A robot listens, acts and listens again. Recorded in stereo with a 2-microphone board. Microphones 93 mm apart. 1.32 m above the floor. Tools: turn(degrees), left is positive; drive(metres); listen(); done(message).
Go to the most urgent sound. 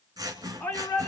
turn(degrees=20)
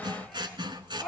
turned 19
drive(metres=1.0)
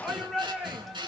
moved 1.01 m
drive(metres=1.0)
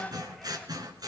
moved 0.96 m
listen()
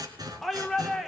drive(metres=1.0)
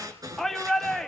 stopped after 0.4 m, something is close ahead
done("Arrived at the shout, straight ahead.")